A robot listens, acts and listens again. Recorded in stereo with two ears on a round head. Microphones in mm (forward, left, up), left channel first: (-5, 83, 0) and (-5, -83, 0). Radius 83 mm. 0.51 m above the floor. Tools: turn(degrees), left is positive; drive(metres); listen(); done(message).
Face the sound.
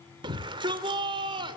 turn(degrees=-25)
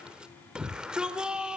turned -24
done("Found it: a shout, straight ahead.")